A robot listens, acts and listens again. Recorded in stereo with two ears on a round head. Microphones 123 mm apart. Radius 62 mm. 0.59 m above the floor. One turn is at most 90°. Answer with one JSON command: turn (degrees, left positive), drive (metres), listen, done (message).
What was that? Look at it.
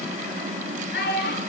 {"turn": 70}
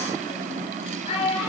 {"turn": 40}
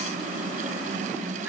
{"turn": -10}
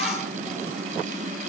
{"listen": true}
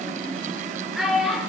{"done": "Facing the child speaking."}